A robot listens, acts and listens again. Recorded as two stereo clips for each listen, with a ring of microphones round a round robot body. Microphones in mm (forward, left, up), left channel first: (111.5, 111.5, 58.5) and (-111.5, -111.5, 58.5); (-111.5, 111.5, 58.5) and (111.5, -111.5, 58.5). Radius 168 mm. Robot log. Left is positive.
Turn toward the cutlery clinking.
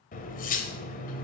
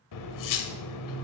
note: The cutlery clinking: 110° left.
cmd yaw +110
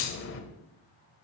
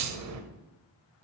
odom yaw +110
end: Found it: cutlery clinking, straight ahead.